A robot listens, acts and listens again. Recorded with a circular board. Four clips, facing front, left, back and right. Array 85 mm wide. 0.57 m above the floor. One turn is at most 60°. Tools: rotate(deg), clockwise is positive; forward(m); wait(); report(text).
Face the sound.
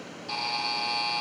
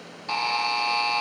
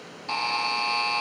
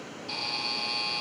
rotate(-60)
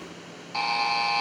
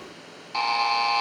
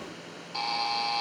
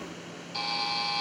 rotate(-60)
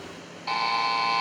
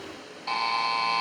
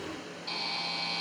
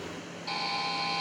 rotate(-30)
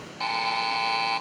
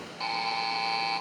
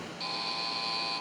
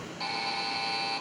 rotate(-10)
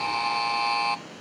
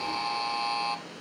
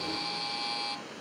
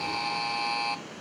report("Found it: a buzzer, straight ahead, under 1 m away.")